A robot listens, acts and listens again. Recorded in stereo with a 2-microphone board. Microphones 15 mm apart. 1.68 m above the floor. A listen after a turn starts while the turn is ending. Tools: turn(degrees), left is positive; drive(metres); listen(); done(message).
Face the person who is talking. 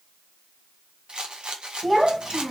turn(degrees=-30)
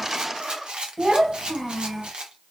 turn(degrees=-145)
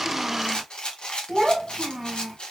done("Found it: a child speaking, straight ahead, 1 to 2 m away.")